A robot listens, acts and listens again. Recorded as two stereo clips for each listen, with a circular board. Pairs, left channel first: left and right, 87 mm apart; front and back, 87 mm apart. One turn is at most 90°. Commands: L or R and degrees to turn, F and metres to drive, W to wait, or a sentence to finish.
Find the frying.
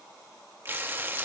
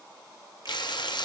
R25
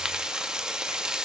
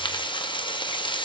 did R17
R10
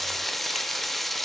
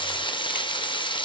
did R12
Facing the frying, under 1 m away.